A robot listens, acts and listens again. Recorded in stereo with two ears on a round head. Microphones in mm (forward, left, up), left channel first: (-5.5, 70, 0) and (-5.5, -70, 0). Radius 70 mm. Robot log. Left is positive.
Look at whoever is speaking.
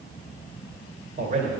note: The man speaking: about 50° right or 130° right.
cmd yaw -50
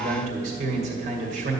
note: So it is at 65° right.
cmd yaw -65
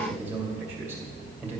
note: The man speaking is now 15° right.
cmd yaw -15
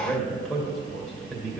end: Found it: a man speaking, straight ahead, 2 to 4 m away.